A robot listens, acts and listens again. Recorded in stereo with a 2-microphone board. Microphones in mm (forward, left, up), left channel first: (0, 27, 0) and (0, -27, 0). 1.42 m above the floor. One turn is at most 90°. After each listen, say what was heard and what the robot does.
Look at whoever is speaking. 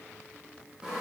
Keep listening.
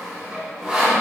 Keep listening.
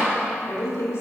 The woman speaking: about 55° left or 125° left. Turn 55° left.
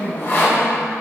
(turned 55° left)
So it is at 75° left. Turn 75° left.
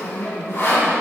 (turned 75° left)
The woman speaking is now 10° right. Turn 10° right.
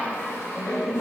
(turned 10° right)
Facing the woman speaking, 2 to 4 m away.